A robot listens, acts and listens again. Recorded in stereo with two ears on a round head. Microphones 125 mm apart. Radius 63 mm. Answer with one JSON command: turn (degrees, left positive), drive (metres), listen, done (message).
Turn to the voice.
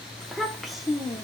{"turn": -30}
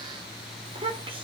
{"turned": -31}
{"turn": -140}
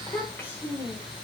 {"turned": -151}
{"turn": 15}
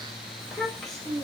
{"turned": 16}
{"done": "Facing the child speaking."}